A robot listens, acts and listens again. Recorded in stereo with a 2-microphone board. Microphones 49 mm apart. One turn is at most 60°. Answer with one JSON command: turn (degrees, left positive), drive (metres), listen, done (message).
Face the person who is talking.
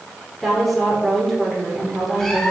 {"turn": 30}
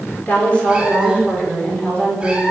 {"turn": 60}
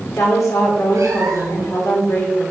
{"turn": 60}
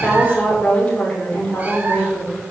{"turn": 20}
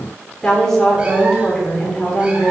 {"turn": 10}
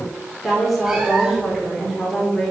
{"done": "Found it: a woman speaking, straight ahead."}